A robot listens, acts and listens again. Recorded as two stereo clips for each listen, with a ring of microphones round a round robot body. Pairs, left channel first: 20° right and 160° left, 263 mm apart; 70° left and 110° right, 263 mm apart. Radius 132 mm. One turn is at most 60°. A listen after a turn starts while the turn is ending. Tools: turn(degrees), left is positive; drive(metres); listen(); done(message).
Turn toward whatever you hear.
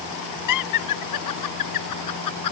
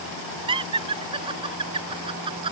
turn(degrees=-40)
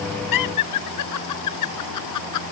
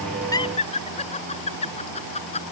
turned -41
done("Found it: laughter, straight ahead.")